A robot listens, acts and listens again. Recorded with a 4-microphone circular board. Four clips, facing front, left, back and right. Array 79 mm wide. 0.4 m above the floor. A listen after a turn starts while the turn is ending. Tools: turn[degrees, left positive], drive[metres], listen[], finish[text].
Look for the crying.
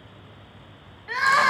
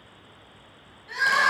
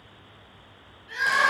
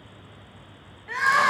Thought: The crying: 25° right.
Action: turn[-25]
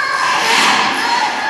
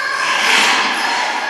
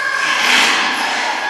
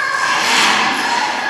Thought: The crying is now 10° right.
Action: turn[-10]
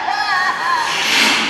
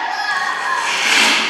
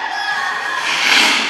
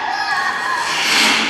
Action: finish[Found it: crying, straight ahead, under 1 m away.]